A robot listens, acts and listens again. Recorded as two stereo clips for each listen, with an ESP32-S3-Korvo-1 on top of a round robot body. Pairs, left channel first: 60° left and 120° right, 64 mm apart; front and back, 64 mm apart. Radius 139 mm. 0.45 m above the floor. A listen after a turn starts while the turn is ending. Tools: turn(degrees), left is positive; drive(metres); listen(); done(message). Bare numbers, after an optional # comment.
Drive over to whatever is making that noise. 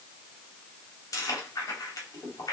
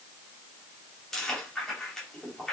# The chewing: 80° left.
turn(80)
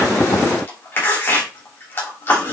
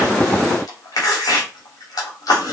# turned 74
# The chewing is now 10° left.
turn(10)
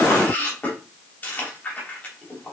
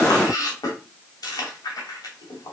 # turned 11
drive(1.0)
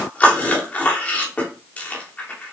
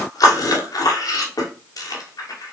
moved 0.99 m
drive(1.0)
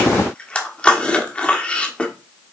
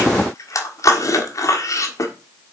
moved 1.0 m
drive(1.0)
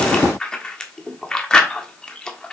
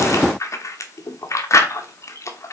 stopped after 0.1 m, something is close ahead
# The chewing is now 10° right.
turn(-10)
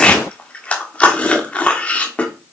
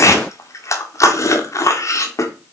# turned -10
done("I am next to the chewing.")